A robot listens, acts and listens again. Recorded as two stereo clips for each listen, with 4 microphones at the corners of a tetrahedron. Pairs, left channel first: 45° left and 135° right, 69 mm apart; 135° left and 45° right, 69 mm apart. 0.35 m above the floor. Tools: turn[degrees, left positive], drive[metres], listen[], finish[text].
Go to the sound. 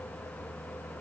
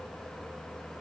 Action: listen[]
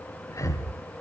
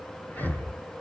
Thought: The breathing: 75° left.
Action: turn[75]
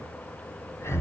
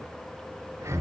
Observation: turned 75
Action: drive[1.0]
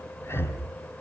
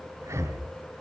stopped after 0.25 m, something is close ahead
Action: finish[Blocked. The breathing is further on, straight ahead.]